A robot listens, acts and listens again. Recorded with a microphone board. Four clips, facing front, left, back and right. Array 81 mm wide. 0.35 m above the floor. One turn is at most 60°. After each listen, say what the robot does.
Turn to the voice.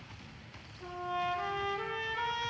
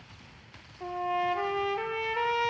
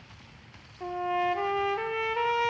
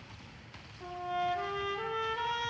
Keep listening.
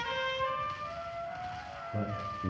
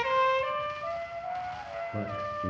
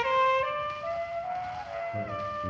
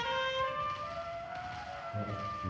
Turn 60° left.
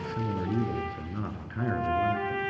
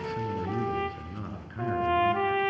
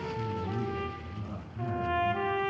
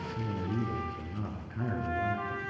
Turn 10° left.
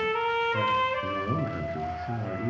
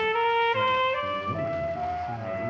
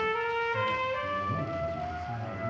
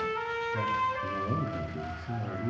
Found it: a man speaking, straight ahead.